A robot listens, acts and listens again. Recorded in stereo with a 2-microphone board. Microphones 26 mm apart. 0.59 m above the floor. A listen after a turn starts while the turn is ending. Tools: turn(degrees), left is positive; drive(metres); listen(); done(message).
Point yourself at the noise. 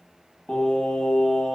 turn(degrees=20)
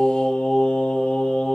turn(degrees=25)
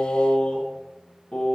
turn(degrees=40)
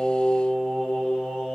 turn(degrees=110)
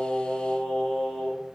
turn(degrees=45)
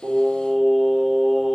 done("Found it: singing, straight ahead.")